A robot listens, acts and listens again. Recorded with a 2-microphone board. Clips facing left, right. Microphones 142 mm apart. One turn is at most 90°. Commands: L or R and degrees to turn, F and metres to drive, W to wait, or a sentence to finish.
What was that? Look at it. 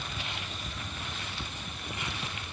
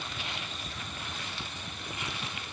W
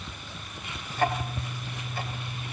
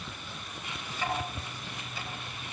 L50
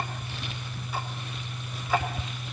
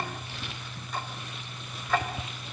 Found it: ticking, straight ahead, 2 to 4 m away.